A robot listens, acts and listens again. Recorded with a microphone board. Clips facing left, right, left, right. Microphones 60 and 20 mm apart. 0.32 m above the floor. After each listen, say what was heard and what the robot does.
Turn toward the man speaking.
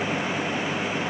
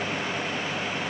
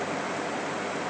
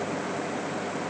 Keep listening.
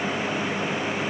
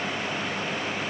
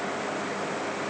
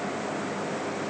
Keep listening.
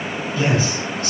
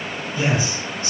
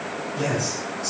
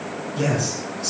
The man speaking: about 25° right or 155° right. Turn 25° right.
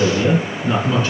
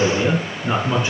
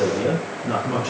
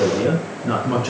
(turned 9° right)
The man speaking: about 20° right or 160° right. Turn 20° right.
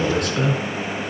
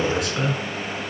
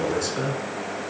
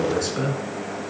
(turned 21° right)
Turn 30° right.
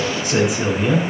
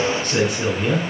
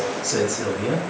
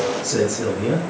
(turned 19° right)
Found it: a man speaking, straight ahead.